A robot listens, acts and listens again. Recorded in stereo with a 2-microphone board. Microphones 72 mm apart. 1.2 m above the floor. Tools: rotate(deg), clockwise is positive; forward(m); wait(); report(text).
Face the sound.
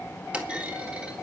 rotate(20)
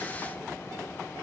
wait()
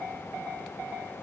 report("I heard a clunk, but can't make it out now. It was about straight ahead or 140° right.")